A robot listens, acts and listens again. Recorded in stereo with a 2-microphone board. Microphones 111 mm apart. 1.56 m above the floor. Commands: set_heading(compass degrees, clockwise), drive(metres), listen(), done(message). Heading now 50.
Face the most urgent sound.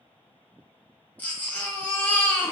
set_heading(20)
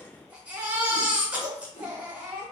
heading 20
set_heading(35)
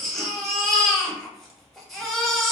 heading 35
done("Facing the baby crying.")